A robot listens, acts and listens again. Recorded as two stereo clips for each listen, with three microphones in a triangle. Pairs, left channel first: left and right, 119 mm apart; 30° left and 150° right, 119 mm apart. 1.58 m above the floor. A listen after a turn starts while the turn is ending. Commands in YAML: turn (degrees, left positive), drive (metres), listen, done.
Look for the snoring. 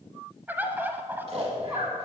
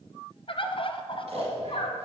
turn: -120
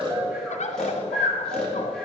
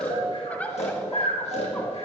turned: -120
done: "Facing the snoring."